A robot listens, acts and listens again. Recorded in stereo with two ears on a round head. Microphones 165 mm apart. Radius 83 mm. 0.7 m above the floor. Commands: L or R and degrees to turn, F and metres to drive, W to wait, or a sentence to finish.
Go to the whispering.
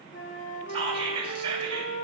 R30
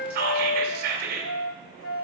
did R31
R115
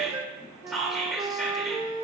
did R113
F1.0
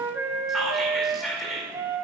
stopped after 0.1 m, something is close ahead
Something is in my way. I am facing the whispering but have not reached it.